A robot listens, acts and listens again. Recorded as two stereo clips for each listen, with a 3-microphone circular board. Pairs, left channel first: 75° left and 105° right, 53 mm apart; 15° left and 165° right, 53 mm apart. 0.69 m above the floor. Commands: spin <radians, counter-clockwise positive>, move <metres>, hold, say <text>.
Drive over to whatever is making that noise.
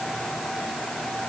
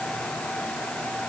hold
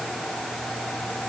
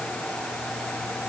hold
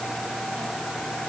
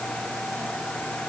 say I can't make out anything.